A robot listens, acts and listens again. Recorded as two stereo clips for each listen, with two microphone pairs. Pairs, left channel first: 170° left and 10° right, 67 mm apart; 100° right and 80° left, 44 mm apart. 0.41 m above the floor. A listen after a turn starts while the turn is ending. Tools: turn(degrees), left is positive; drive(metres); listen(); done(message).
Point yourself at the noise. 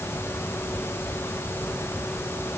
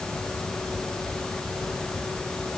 listen()
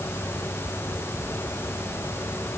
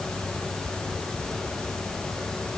listen()
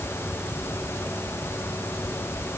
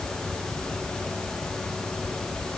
done("I can't make out anything to turn to.")